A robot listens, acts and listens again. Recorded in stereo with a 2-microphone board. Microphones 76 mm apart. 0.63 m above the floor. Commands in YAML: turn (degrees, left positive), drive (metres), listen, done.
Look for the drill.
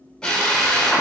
turn: 30
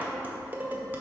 listen: true
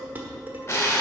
turn: 140
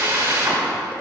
turn: -35
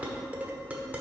listen: true
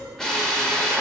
turn: 10
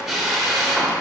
done: "Facing the drill."